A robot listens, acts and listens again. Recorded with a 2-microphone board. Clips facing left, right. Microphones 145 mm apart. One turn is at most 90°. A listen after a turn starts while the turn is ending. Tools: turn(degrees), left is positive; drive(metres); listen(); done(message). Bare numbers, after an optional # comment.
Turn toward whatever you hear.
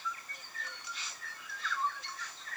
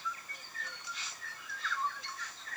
listen()
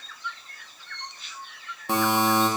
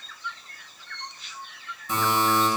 # The buzzer: about 70° left or 110° left.
turn(70)
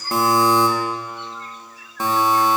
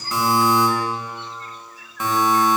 # So it is at 35° left.
turn(35)
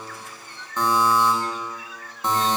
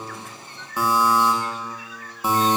# The buzzer is now 10° right.
turn(-10)
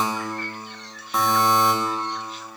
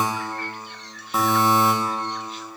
done("Found it: a buzzer, straight ahead.")